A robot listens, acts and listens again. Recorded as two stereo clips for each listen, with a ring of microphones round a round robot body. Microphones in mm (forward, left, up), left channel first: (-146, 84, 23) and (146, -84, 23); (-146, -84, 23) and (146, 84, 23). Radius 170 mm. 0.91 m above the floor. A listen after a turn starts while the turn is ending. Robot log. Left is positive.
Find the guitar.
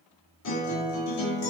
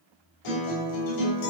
note: The guitar: 160° right.
cmd yaw -160
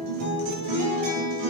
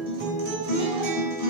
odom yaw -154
end: Found it: a guitar, straight ahead, 2 to 4 m away.